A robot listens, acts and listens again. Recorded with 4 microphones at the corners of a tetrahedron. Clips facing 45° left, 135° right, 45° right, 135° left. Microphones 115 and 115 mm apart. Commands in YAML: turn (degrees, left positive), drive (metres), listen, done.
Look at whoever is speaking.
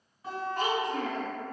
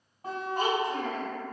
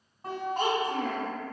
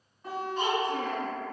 turn: -60
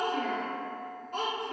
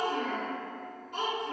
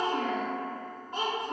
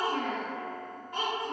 turn: 10
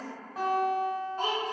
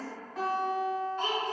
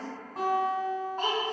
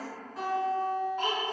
done: "Facing the child speaking."